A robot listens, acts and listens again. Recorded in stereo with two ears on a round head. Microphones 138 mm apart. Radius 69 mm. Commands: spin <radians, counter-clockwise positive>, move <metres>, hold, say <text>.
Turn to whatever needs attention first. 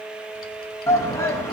spin 0.35
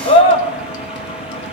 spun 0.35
spin 2.36
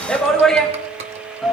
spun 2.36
say Facing the shout.